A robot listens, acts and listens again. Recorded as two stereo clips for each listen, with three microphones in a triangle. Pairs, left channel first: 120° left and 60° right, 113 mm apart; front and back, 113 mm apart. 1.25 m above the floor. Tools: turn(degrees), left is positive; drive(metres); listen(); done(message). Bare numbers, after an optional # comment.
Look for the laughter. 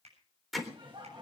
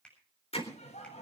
# The laughter: 15° right.
turn(-15)
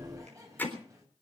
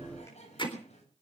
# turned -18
done("Facing the laughter.")